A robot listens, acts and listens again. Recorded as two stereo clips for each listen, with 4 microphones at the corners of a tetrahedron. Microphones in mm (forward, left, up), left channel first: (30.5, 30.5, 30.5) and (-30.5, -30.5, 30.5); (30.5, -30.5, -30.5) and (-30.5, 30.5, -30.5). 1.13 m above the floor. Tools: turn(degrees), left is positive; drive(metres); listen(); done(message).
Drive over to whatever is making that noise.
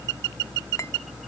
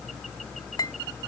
turn(degrees=-10)
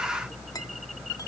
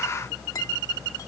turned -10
listen()
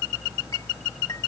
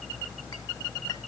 listen()
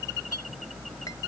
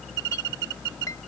done("I heard a clink from this way, but can't make it out now. I did not reach it.")